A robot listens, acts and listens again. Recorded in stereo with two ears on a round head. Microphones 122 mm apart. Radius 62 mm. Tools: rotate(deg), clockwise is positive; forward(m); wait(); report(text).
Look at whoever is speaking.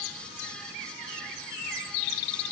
wait()
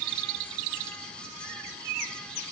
wait()
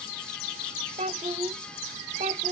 rotate(45)
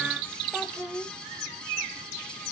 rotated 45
report("Found it: a child speaking, straight ahead.")